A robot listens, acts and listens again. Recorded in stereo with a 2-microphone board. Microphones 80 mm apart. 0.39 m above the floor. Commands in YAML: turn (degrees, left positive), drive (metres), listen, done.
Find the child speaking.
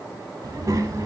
turn: -40
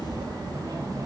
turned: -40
turn: -130
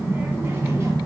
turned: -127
turn: -35
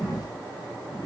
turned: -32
turn: -15
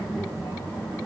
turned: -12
done: "Found it: a child speaking, straight ahead, 2 to 4 m away."